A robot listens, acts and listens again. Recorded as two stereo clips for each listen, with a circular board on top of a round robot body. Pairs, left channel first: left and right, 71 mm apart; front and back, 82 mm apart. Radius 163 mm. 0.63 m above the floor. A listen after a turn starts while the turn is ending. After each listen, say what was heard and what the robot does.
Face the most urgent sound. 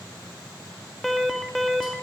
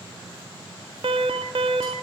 The alarm: straight behind. Turn 180° left.
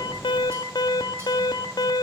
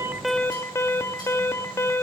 The alarm is now 60° left. Turn 60° left.
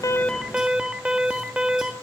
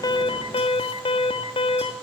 The alarm is now 10° right. Turn 10° right.
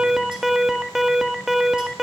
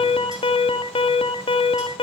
Facing the alarm.